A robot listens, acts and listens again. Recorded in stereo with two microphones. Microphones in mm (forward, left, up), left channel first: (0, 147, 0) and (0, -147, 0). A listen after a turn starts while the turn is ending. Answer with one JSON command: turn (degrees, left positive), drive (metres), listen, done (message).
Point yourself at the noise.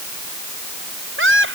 {"turn": -45}
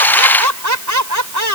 {"turn": -90}
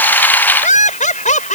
{"turn": 25}
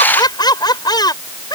{"turn": 15}
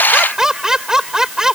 {"done": "Facing the laughter."}